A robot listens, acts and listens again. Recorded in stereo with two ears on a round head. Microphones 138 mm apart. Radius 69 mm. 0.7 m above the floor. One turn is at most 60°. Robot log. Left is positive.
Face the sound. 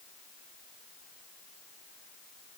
cmd idle
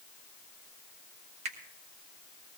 note: The finger snap: about 45° right or 135° right.
cmd yaw -45
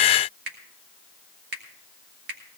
note: So it is at 90° right.
cmd yaw -60
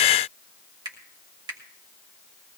note: The finger snap is now 30° right.
cmd yaw -30
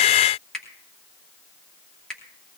end: Found it: a finger snap, straight ahead.